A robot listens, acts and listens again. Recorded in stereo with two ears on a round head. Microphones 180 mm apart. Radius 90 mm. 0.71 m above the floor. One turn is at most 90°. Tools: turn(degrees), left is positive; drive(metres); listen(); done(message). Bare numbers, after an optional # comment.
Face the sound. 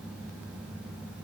listen()
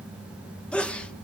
turn(30)
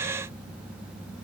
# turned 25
listen()
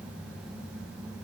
done("I heard a sneeze, but can't make it out now. It was about 20° right or 150° left.")